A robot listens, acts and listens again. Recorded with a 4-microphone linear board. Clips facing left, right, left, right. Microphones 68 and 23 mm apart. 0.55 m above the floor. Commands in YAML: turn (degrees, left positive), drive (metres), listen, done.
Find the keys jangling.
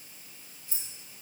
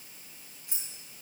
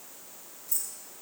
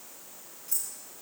turn: -65
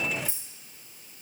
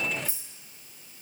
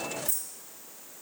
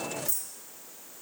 turn: -55
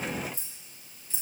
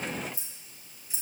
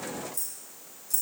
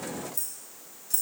turn: -10
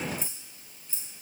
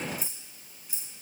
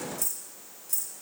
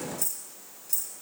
turn: -15
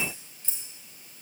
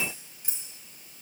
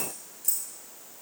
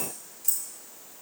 turn: -15
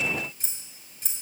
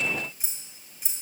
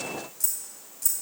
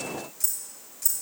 done: "Facing the keys jangling."